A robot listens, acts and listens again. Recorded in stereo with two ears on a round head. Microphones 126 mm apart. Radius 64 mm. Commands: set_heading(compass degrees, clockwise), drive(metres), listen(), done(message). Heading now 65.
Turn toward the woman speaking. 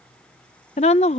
set_heading(20)
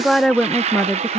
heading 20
done("Found it: a woman speaking, straight ahead.")